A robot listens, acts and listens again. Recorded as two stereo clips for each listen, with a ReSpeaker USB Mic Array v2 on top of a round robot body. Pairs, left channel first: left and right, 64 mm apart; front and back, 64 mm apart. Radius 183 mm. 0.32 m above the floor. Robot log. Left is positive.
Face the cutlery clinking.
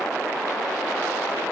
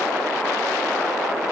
cmd idle
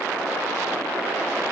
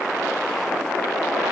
cmd idle
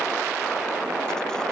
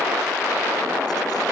end: I can't make out cutlery clinking.